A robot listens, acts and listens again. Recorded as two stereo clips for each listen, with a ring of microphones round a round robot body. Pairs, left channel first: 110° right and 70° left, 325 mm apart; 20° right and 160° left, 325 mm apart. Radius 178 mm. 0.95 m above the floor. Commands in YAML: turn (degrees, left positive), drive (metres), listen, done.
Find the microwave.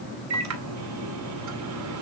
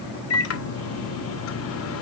turn: 25
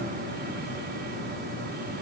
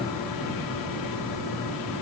listen: true
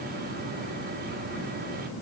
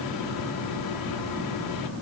listen: true
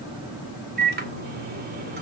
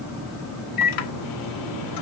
done: "Found it: a microwave, straight ahead, 2 to 4 m away."